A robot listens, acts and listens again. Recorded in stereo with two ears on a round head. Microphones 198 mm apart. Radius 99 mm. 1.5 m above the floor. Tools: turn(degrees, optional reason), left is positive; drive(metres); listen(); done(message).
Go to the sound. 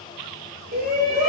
turn(degrees=-40, reason="The shout: about 40° right or 140° right.")
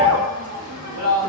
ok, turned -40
turn(degrees=-100, reason="So it is at 100° right.")
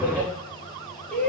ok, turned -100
drive(metres=1.0)
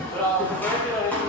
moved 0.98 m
turn(degrees=10, reason="The shout is now 10° left.")
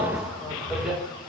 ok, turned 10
drive(metres=1.0)
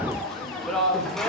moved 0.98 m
drive(metres=1.0)
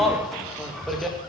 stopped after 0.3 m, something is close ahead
done("I am next to the shout.")